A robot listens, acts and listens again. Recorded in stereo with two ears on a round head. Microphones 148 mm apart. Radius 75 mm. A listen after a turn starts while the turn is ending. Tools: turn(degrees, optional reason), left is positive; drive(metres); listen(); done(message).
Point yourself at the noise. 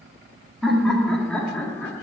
turn(degrees=30)
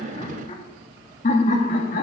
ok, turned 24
turn(degrees=130, reason="So it is at 130° left.")
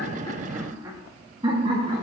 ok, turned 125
turn(degrees=-30, reason="The laughter is now 30° right.")
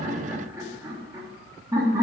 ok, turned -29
turn(degrees=-20, reason="The laughter is now 20° right.")
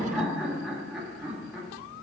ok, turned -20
done("Facing the laughter.")